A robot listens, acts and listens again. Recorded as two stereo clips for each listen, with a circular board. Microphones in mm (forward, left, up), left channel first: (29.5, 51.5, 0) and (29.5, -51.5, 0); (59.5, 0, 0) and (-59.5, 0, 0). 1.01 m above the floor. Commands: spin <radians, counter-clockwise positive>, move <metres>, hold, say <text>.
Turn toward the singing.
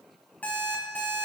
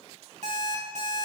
hold
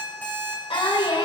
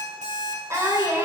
spin 2.01
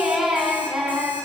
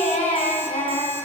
say Facing the singing, 2 to 4 m away.